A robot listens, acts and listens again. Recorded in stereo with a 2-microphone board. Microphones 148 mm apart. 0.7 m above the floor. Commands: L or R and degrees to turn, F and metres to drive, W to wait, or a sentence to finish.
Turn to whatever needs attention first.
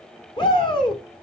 L30
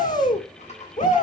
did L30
L120
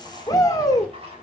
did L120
L25
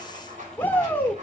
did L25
L10
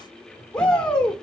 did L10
Facing the shout, 1 to 2 m away.